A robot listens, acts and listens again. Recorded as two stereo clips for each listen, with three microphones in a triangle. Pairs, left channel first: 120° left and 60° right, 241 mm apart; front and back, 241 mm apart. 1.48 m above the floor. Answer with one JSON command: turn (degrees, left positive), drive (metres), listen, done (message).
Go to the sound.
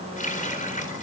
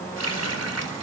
{"turn": 180}
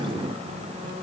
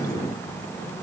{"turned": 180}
{"listen": true}
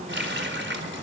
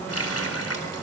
{"turn": -20}
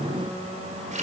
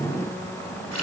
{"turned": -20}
{"drive": 1.0}
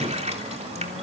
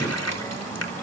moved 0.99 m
{"drive": 1.0}
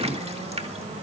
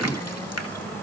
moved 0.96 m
{"drive": 1.0}
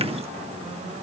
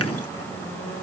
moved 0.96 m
{"listen": true}
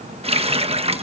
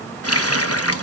{"drive": 1.0}
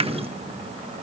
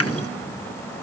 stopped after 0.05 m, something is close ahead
{"listen": true}
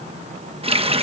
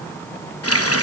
{"done": "Arrived at the running tap, straight ahead."}